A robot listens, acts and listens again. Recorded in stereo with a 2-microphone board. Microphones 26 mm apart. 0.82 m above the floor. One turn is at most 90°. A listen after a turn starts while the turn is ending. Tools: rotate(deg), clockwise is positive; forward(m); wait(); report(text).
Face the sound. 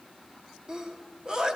rotate(30)
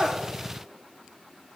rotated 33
wait()
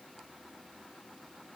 report("I heard a sneeze, but can't make it out now. It was about 5° left or 120° right.")